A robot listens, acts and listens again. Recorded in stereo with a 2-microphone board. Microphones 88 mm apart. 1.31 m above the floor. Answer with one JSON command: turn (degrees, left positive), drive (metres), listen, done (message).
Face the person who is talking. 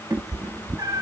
{"listen": true}
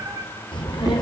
{"turn": 70}
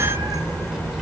{"done": "Facing the child speaking, over 4 m away."}